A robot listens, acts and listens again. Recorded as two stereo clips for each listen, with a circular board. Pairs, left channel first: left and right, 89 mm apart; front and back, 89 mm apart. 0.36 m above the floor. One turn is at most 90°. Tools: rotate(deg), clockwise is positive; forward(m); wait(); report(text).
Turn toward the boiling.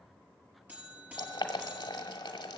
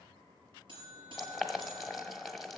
rotate(-90)
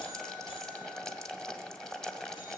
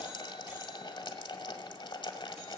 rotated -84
report("Facing the boiling.")